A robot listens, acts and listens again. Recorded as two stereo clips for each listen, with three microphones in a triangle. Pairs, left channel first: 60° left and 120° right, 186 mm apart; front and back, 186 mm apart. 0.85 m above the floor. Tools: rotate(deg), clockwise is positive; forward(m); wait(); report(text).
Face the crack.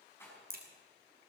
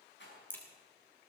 rotate(80)
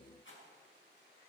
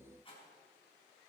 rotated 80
report("Facing where the crack came from. I can't hear it now.")